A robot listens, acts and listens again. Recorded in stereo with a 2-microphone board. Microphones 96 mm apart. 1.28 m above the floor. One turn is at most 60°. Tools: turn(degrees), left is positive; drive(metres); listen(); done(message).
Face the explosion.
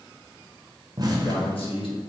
turn(degrees=-40)
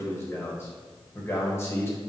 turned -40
listen()
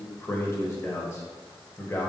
done("I heard an explosion, but can't make it out now. It was about straight ahead or 100° right.")